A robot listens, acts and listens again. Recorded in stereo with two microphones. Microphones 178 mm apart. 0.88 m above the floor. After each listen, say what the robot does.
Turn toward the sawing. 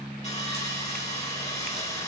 Turn 40° left.
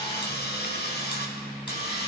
Turn 95° left.
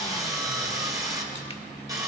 Turn 20° right.
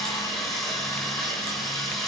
Facing the sawing, over 4 m away.